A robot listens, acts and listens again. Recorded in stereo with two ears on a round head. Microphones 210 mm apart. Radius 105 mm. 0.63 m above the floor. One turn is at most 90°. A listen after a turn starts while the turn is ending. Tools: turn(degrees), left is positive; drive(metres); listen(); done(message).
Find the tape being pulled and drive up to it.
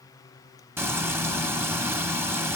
listen()
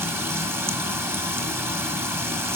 listen()
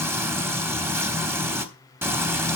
done("I can't make out tape being pulled to turn to.")